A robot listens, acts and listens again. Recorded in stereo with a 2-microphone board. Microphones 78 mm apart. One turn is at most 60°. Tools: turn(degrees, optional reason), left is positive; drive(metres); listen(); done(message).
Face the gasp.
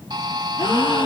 turn(degrees=60, reason="The gasp: about 75° left or 105° left.")
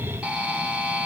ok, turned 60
listen()
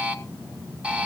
done("I heard a gasp, but can't make it out now. It was about 15° left or 45° left.")